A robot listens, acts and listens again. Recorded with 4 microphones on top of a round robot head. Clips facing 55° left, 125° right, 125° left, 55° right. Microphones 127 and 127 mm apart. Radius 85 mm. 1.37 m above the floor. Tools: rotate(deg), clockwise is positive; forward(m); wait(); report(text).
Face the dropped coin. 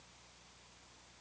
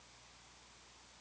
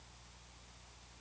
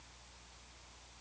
wait()
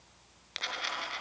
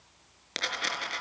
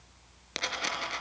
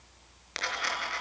rotate(170)
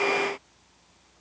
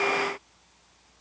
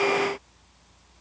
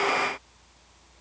report("I heard a dropped coin from this way, but can't make it out now.")